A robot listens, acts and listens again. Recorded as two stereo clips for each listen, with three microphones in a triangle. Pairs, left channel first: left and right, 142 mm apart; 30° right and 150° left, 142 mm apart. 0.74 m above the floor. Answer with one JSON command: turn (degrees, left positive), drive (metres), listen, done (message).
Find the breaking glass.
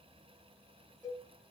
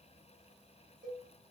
{"listen": true}
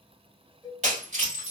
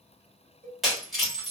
{"turn": -120}
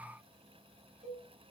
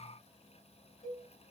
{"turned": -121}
{"done": "Facing where the breaking glass came from. I can't hear it now."}